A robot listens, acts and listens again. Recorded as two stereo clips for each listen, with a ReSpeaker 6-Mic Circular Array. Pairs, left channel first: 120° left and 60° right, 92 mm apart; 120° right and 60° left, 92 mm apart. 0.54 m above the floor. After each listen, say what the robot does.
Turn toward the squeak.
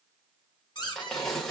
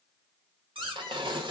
Turn 80° left.
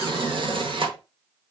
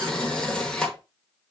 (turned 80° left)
Keep listening.
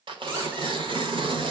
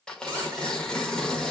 Keep listening.
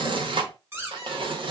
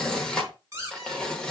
Found it: a squeak, straight ahead, 1 to 2 m away.